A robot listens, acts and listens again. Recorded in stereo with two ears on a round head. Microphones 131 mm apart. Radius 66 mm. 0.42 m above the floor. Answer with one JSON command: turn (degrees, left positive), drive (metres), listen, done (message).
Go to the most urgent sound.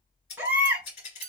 {"turn": -30}
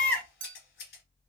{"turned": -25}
{"turn": 10}
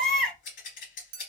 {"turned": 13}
{"drive": 1.0}
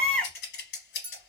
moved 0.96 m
{"drive": 1.0}
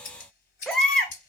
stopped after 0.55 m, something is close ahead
{"done": "I am next to the baby crying."}